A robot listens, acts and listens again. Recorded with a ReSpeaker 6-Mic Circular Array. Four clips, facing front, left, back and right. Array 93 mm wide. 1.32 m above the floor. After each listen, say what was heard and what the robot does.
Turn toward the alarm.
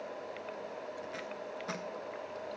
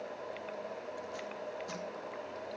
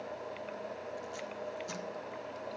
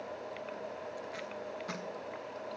Keep listening.
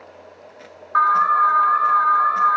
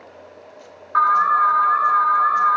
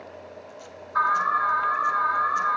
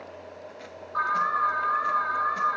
The alarm: 40° left. Turn 40° left.
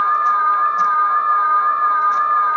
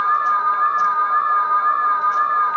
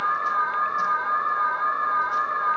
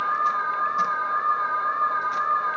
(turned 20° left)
The alarm is now 20° left. Turn 20° left.
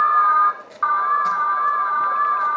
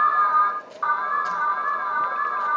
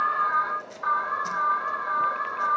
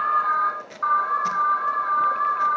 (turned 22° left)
Facing the alarm.